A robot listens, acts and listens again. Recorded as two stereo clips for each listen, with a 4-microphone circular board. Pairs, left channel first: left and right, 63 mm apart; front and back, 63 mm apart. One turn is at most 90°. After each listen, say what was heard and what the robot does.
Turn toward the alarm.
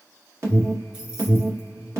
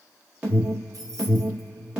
The alarm: 115° right. Turn 90° right.
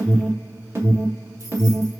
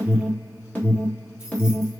The alarm is now 60° right. Turn 60° right.
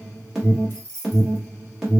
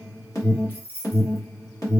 The alarm is now 10° right. Turn 10° right.
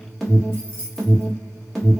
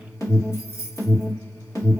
Found it: an alarm, straight ahead, 1 to 2 m away.